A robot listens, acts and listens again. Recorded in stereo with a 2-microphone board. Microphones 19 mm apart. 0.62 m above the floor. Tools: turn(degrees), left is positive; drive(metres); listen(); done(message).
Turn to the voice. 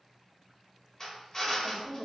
turn(degrees=-25)
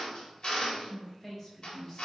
turn(degrees=10)
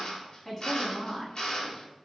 turn(degrees=25)
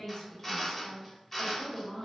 turn(degrees=35)
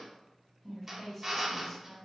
turn(degrees=15)
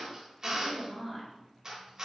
done("Facing the woman speaking, 1 to 2 m away.")